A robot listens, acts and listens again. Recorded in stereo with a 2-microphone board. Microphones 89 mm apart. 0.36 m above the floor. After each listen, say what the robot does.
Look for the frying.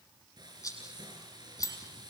Turn 50° right.
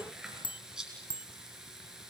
Found it: frying, straight ahead.